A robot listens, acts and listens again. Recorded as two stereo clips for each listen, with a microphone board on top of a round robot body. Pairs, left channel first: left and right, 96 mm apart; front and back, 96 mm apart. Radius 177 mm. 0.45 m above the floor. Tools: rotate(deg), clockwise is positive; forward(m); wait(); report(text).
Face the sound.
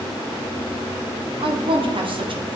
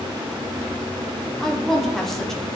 rotate(85)
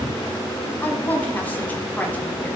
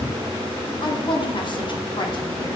rotate(-20)
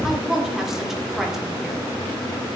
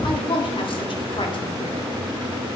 report("Facing the woman speaking.")